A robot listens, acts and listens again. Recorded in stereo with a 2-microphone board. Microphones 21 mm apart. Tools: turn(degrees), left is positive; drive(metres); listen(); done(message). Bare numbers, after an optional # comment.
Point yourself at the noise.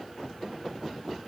listen()
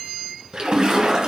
# The splash: about 40° right or 140° right.
turn(-40)
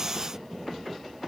listen()
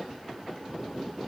done("I heard a splash, but can't make it out now. It was about straight ahead or 100° right.")